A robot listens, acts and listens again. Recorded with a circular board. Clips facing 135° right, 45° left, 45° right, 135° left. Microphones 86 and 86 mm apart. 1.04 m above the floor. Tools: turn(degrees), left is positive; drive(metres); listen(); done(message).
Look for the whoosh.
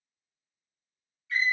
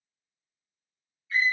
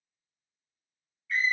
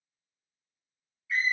listen()
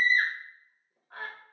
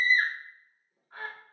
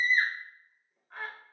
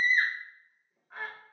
listen()
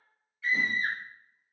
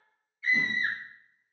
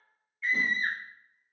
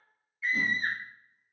turn(degrees=-80)
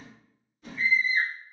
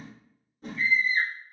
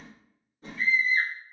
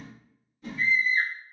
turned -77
done("Facing the whoosh, under 1 m away.")